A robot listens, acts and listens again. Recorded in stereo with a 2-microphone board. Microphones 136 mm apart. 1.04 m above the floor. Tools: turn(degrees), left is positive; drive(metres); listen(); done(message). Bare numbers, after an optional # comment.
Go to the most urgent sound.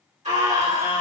# The scream: about 65° right or 115° right.
turn(-65)
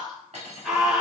drive(1.0)
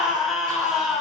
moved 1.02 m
drive(1.0)
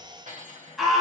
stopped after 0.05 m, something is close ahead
done("Arrived at the scream, straight ahead.")